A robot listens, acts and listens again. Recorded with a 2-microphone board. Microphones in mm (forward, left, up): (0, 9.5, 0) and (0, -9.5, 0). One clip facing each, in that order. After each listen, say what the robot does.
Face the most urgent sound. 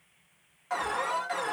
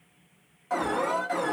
Turn 15° left.
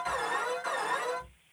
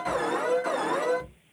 Found it: an alarm, straight ahead, 1 to 2 m away.